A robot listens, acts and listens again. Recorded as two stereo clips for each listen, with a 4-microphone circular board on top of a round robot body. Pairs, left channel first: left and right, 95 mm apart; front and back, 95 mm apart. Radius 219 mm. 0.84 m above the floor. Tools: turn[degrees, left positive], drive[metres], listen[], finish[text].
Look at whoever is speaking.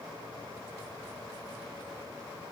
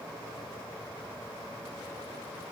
Action: listen[]
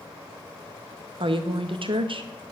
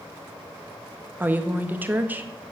Thought: The woman speaking: 110° right.
Action: turn[-110]
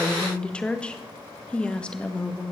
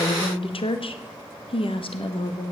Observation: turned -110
Thought: The woman speaking is now 10° left.
Action: turn[10]
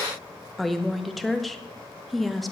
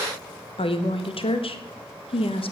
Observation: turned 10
Action: finish[Facing the woman speaking.]